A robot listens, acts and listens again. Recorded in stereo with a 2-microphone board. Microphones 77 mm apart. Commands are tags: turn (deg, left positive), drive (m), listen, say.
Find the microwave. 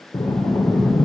<listen/>
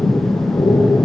<listen/>
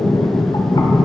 <say>I can't make out a microwave, only breathing.</say>